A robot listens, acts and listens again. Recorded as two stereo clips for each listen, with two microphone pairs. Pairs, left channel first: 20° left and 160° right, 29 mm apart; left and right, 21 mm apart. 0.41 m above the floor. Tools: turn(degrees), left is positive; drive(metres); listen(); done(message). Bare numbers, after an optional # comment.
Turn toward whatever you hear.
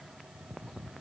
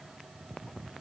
listen()
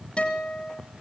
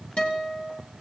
# The guitar: 75° left.
turn(75)
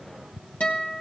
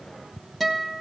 done("Facing the guitar, 2 to 4 m away.")